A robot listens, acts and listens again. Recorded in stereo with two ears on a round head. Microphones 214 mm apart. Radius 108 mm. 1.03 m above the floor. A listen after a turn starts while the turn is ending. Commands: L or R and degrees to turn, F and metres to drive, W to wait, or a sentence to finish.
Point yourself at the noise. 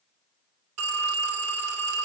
R65
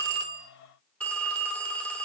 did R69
Found it: a phone ringing, straight ahead.